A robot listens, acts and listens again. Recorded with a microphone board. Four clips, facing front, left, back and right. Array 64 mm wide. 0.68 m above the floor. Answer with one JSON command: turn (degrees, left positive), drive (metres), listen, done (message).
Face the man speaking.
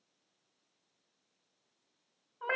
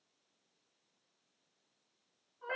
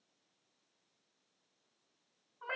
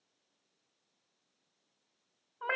{"listen": true}
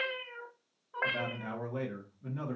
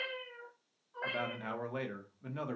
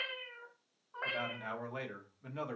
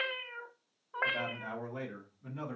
{"turn": 135}
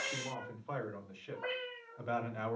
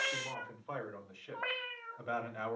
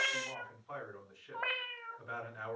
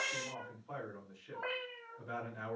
{"turn": 40}
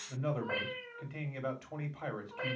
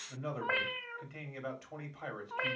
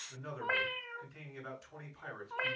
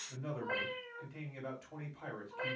{"turn": 15}
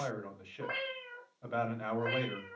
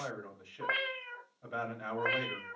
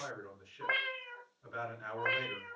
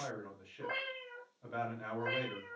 {"done": "Facing the man speaking, 1 to 2 m away."}